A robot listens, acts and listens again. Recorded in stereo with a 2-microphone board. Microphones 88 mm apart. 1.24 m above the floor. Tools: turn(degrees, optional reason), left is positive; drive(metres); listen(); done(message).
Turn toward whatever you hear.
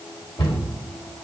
turn(degrees=70, reason="The cupboard door: about 70° left or 110° left.")
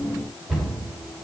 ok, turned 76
done("Found it: a cupboard door, straight ahead, over 4 m away.")